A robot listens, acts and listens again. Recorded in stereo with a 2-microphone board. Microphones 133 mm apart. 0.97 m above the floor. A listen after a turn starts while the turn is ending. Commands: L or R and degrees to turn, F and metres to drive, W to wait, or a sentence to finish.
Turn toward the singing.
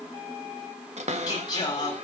L30
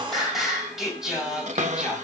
Found it: singing, straight ahead, over 4 m away.